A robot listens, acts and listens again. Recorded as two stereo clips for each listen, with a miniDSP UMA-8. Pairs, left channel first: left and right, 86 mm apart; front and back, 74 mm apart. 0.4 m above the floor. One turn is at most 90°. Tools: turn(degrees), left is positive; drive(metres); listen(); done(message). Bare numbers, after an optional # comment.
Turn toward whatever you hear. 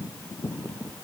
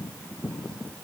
listen()
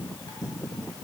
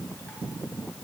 listen()
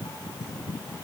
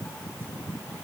done("I can't make out anything.")